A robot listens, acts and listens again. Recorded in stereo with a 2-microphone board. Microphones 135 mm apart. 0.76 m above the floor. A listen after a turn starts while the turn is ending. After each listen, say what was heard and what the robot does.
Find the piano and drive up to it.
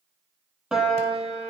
Turn 30° right.
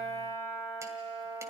So it is at 30° left. Turn 30° left.
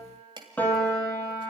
The piano is now 10° left. Turn 10° left.
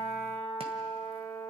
Drive 1.0 m forward.
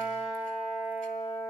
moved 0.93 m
Drive 1.0 m forward.
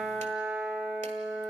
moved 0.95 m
Drive 1.0 m forward.
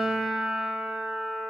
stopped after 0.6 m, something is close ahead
I am next to the piano.